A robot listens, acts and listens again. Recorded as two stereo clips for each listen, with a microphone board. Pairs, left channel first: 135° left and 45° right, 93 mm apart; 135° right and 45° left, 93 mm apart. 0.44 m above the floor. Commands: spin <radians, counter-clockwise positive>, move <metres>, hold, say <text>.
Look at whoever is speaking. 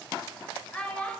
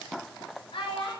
spin -2.62
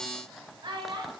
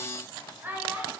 spin -0.44
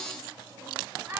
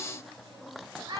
spin 0.26
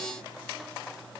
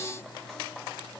hold
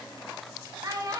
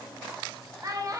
say Found it: a child speaking, straight ahead, under 1 m away.